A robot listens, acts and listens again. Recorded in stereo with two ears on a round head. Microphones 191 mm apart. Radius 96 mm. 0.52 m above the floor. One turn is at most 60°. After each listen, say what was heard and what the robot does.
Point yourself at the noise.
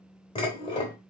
The dishes clattering: about 25° left or 155° left. Turn 25° left.
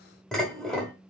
Facing the dishes clattering.